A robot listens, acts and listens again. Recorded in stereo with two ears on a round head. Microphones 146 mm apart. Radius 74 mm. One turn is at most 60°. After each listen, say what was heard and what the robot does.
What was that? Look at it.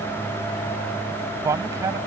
The man speaking: about 20° right or 160° right. Turn 20° right.
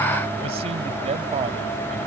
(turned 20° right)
So it is at 140° right. Turn 60° right.
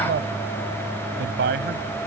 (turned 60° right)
The man speaking is now 90° right. Turn 60° right.
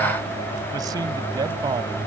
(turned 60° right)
The man speaking is now 25° right. Turn 25° right.
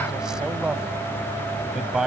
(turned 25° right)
Found it: a man speaking, straight ahead.